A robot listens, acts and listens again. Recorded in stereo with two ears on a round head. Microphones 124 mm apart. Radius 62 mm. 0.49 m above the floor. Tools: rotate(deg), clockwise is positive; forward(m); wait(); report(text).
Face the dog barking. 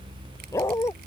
rotate(-20)
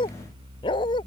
rotate(-35)
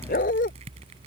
rotate(-115)
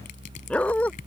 rotate(-10)
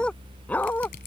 rotate(-15)
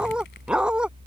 report("Facing the dog barking.")